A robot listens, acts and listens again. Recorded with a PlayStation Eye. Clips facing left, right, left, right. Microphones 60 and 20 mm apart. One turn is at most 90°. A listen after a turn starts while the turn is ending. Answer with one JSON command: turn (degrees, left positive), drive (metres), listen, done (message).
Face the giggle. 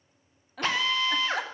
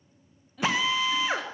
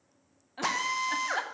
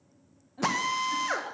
{"turn": 90}
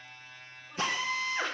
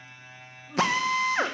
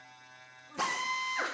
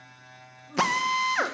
{"listen": true}
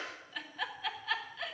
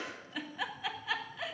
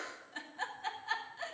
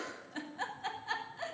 {"done": "Found it: a giggle, straight ahead."}